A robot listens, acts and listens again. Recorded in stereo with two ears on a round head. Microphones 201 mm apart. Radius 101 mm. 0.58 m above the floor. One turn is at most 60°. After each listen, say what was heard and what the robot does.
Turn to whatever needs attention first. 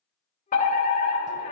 The fire alarm: about 40° left or 140° left. Turn 40° left.
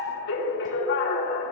So it is at 95° left. Turn 60° left.
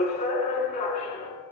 The fire alarm is now 35° left. Turn 35° left.
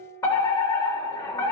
The fire alarm is now 15° left. Turn 15° left.
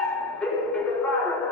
Facing the fire alarm, 2 to 4 m away.